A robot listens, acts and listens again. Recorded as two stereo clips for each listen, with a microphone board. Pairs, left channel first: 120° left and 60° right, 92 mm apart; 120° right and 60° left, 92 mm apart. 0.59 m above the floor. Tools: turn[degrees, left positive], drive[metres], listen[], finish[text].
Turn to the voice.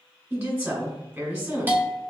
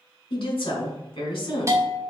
Thought: The woman speaking: 135° right.
Action: turn[-135]
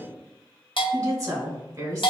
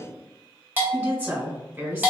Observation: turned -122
Thought: The woman speaking is now 15° right.
Action: turn[-15]
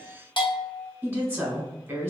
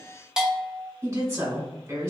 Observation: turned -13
Action: finish[Facing the woman speaking, 1 to 2 m away.]